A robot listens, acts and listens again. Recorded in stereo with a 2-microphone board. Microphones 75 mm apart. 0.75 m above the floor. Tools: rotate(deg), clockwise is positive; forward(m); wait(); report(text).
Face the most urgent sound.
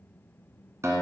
wait()
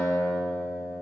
wait()
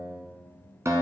report("I can't make out anything urgent, only a guitar.")